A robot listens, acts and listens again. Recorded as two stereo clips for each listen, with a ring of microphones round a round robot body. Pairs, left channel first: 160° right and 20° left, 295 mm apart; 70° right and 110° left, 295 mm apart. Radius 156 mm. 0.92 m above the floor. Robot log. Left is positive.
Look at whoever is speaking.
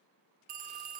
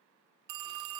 cmd idle
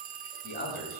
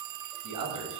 note: The man speaking: 140° left.
cmd yaw +140
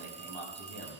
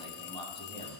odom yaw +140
end: Found it: a man speaking, straight ahead, over 4 m away.